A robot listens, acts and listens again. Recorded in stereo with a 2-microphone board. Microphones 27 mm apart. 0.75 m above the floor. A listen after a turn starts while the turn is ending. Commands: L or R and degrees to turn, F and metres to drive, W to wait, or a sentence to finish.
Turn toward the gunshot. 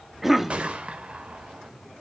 R45
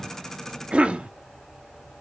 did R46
W
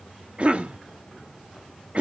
I heard a gunshot, but can't make it out now. It was about 5° left or 90° right.